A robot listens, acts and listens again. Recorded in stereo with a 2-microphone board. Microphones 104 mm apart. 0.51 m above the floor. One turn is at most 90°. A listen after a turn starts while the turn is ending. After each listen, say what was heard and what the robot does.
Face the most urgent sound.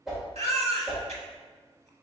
Turn 90° right.
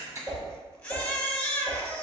So it is at 10° left. Turn 10° left.
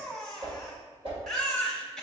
Found it: a baby crying, straight ahead, under 1 m away.